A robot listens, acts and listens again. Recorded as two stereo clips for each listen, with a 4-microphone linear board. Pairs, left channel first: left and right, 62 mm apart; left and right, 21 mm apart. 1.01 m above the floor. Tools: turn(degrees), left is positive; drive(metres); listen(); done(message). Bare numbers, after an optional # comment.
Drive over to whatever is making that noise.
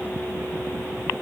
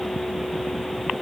listen()
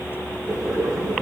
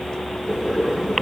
turn(-30)
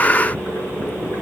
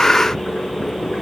# So it is at 25° left.
turn(25)
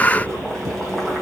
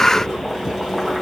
# The boiling is now 10° left.
turn(10)
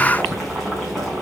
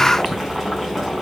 drive(1.0)
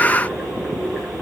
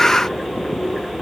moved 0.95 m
drive(1.0)
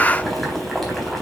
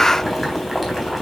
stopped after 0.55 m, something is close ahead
done("Something is in my way. I am facing the boiling but have not reached it.")